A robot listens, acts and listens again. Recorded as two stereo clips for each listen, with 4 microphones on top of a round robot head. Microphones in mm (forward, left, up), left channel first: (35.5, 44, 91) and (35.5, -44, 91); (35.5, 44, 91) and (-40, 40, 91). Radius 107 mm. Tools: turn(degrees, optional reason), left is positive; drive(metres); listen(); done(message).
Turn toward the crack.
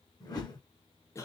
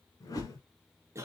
listen()
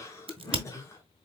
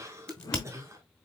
turn(degrees=-75, reason="The crack: 75° right.")
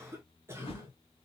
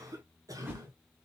done("I heard a crack from this way, but can't make it out now.")